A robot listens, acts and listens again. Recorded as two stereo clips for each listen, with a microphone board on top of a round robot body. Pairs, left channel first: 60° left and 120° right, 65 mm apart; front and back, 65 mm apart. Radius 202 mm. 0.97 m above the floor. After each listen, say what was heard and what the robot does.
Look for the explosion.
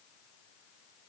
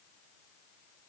Keep listening.
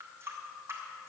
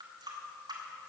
Keep listening.
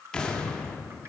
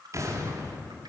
The explosion: 140° left. Turn 140° left.
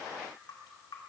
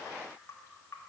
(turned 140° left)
I heard an explosion from this way, but can't make it out now.